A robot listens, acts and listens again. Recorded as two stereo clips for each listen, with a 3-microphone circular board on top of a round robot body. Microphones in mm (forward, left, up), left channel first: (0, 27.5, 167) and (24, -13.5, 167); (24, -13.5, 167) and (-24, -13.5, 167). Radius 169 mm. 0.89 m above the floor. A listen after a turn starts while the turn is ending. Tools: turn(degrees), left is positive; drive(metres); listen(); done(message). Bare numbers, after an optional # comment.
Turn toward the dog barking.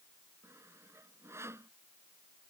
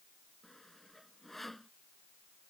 listen()
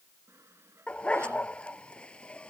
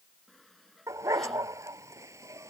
# The dog barking: 170° right.
turn(-170)
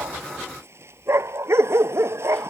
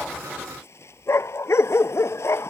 # The dog barking is now 30° right.
turn(-30)
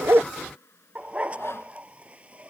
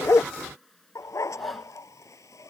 done("Found it: a dog barking, straight ahead.")